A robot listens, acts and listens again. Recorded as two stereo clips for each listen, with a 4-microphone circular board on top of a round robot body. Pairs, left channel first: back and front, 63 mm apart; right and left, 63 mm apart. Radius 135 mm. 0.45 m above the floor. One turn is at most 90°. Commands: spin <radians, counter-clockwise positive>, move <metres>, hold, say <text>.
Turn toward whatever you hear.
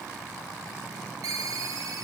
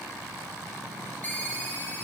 spin -0.44
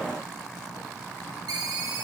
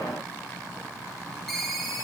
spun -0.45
say Found it: a ringtone, straight ahead, 2 to 4 m away.